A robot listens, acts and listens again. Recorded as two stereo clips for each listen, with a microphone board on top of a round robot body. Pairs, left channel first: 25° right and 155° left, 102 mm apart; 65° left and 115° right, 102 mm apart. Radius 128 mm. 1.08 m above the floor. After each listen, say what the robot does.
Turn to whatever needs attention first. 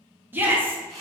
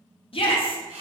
Turn 90° left.
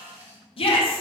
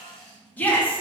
Found it: a shout, straight ahead.